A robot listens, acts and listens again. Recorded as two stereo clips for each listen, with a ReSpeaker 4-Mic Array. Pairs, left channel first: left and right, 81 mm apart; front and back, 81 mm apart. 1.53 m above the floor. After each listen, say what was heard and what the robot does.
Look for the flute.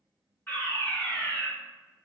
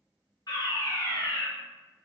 Keep listening.
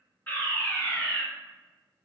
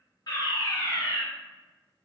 Keep listening.
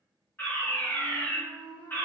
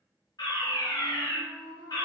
The flute: 65° left. Turn 65° left.
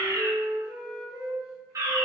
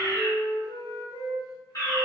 Facing the flute.